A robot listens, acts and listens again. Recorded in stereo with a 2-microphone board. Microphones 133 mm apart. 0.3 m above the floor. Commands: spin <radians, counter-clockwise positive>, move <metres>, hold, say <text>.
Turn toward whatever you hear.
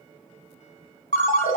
spin 1.22
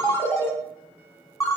spin 0.35
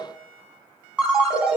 say Facing the ringtone, 1 to 2 m away.